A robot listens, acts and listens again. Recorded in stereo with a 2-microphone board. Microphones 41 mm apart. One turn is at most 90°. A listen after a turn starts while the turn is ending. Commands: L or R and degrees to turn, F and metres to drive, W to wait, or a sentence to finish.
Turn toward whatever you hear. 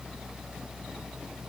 W
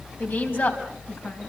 L55
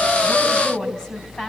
L15
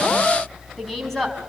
Facing the woman speaking, over 4 m away.